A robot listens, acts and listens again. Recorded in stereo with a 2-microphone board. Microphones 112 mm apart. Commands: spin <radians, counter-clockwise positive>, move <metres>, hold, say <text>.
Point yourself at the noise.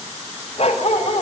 spin 1.05
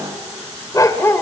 spin 0.35
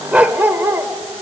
spin -0.44
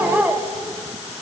spin -0.26
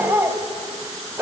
spin -0.35
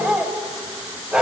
spin -0.17
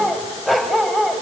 say Facing the dog barking.